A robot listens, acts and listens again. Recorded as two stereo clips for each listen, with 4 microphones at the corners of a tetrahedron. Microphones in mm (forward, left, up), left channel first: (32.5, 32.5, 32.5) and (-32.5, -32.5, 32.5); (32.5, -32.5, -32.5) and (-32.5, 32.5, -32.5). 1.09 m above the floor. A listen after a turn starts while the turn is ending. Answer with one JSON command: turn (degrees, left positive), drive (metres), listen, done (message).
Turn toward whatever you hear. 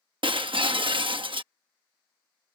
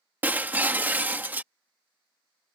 {"turn": -155}
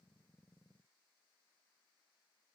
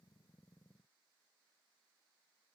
{"done": "Facing where the breaking glass came from. I can't hear it now."}